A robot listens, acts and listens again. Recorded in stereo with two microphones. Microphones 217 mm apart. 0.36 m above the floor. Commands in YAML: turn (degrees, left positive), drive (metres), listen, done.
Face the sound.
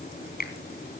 turn: 45
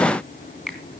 done: "Found it: a finger snap, straight ahead, 2 to 4 m away."